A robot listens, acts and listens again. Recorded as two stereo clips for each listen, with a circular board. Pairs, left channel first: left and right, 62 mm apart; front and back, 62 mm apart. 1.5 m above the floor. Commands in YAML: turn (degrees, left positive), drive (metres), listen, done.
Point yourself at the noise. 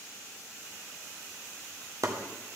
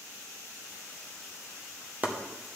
turn: -115
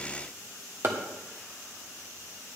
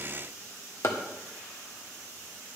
turn: -40
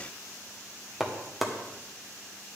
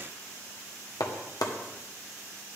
done: "Found it: chopping, straight ahead, 1 to 2 m away."